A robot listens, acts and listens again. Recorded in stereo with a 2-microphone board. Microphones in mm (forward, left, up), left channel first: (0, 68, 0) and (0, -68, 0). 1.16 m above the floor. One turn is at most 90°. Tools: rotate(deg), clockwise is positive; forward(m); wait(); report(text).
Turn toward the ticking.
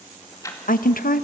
rotate(-25)
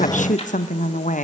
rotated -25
wait()
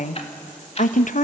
wait()
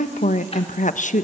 report("I heard ticking, but can't make it out now. It was about straight ahead or 130° left.")